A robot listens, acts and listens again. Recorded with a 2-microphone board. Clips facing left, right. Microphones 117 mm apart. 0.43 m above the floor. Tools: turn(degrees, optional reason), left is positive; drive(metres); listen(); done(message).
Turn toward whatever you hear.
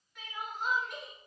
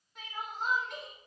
turn(degrees=-30, reason="The crying: about 30° right or 150° right.")
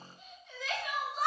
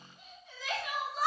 done("Facing the crying, 1 to 2 m away.")